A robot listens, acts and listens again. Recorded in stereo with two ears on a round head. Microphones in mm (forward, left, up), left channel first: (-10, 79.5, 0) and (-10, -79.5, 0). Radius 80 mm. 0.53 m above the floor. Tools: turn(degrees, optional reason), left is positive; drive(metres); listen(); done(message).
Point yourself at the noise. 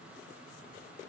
listen()
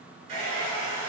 turn(degrees=-35, reason="The hair dryer: about 35° right or 145° right.")
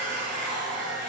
done("Found it: a hair dryer, straight ahead.")